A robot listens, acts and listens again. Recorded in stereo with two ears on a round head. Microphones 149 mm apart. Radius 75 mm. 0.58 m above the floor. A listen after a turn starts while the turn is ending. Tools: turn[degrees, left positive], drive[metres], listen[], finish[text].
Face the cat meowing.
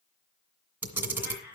Thought: The cat meowing: about 70° left or 110° left.
Action: turn[70]
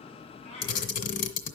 Thought: So it is at 35° left.
Action: turn[35]
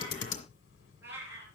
Thought: The cat meowing is now 15° right.
Action: turn[-15]
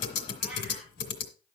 Action: listen[]
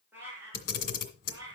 Thought: The cat meowing is now 20° right.
Action: turn[-20]
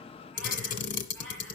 Action: finish[Facing the cat meowing, over 4 m away.]